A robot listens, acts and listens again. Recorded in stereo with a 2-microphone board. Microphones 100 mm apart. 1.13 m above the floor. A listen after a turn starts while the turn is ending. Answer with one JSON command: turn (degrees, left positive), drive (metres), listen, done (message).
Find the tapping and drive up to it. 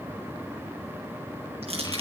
{"listen": true}
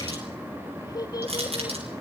{"listen": true}
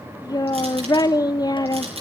{"done": "I can't make out tapping, only a child speaking and crushing."}